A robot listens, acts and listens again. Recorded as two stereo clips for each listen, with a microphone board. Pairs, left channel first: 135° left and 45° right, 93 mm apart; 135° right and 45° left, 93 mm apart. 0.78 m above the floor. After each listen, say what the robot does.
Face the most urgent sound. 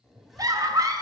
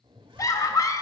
Turn 90° right.
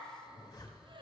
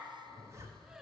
Keep listening.
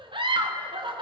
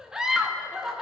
Turn 35° right.
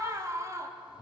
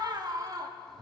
Facing the scream.